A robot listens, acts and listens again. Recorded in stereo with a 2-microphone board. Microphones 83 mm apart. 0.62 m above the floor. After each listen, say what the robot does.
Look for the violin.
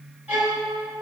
Turn 20° right.
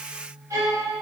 Turn 135° right.
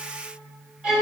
Turn 10° right.
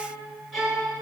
Facing the violin.